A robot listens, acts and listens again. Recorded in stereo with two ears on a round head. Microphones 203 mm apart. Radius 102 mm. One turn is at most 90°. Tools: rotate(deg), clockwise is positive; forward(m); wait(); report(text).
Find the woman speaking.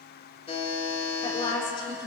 rotate(-20)
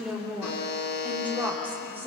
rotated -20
rotate(10)
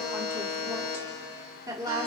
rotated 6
rotate(20)
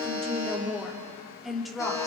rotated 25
report("Found it: a woman speaking, straight ahead, 2 to 4 m away.")